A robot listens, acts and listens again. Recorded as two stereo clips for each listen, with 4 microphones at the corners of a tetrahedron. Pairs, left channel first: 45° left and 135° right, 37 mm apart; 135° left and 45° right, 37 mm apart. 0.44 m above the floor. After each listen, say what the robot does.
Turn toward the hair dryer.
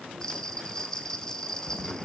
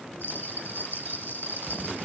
Keep listening.
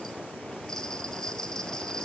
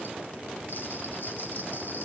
Keep listening.
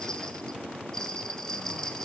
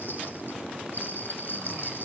I can't make out a hair dryer, only a bell.